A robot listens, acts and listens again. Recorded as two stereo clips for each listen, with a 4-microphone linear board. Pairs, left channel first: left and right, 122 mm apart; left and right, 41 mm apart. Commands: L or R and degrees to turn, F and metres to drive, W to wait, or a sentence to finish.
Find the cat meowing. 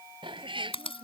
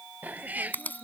R45
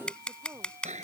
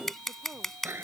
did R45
R95
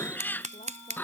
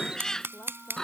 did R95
L15
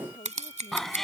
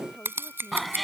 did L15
Facing the cat meowing.